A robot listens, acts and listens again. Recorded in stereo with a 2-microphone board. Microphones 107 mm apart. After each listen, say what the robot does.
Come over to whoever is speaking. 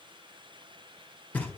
Keep listening.
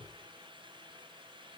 Keep listening.
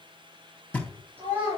Turn 20° right.
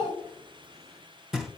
Drive 1.0 m forward.
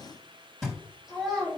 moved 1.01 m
Drive 1.0 m forward.
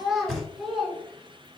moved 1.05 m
Drive 1.0 m forward.
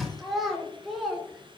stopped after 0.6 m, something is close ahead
I am next to the child speaking.